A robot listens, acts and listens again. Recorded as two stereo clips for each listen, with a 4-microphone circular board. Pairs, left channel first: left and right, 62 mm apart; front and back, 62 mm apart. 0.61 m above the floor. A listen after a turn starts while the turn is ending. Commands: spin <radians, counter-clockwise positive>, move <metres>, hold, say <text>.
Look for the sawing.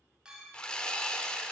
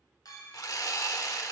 spin 0.26
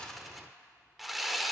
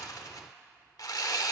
say Facing the sawing, 1 to 2 m away.